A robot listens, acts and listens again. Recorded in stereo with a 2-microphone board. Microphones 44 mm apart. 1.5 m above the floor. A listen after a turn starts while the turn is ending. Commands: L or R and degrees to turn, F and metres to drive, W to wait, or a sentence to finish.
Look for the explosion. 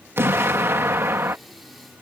R65
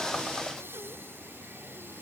W
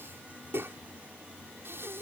I heard an explosion, but can't make it out now. It was about straight ahead or 50° right.